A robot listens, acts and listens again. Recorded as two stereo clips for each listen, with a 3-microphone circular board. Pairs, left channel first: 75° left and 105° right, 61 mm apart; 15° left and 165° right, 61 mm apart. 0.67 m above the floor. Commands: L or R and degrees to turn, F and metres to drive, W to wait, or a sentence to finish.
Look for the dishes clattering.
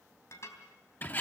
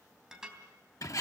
L115
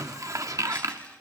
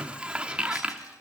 W
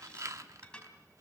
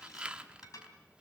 Found it: dishes clattering, straight ahead.